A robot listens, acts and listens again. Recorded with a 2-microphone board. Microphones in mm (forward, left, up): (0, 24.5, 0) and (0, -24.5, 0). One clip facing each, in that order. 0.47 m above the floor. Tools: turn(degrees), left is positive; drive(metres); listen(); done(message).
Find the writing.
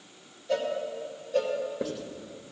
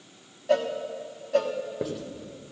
turn(degrees=-30)
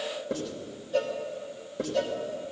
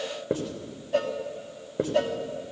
turn(degrees=-145)
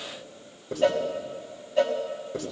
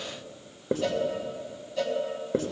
turn(degrees=-50)
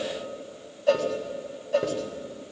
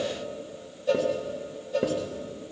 turn(degrees=-10)
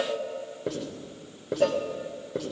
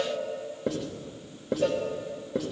done("Facing the writing.")